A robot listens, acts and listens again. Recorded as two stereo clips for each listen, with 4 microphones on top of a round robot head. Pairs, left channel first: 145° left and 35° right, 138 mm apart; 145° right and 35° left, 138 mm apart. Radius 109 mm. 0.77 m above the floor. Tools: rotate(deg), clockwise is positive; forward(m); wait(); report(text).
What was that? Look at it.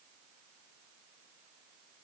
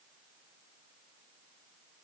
wait()
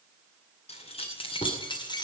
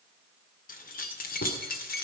rotate(155)
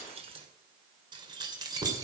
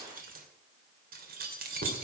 rotate(-30)
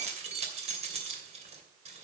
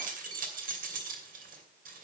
rotate(-10)
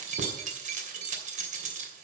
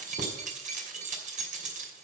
report("Found it: keys jangling, straight ahead, 2 to 4 m away.")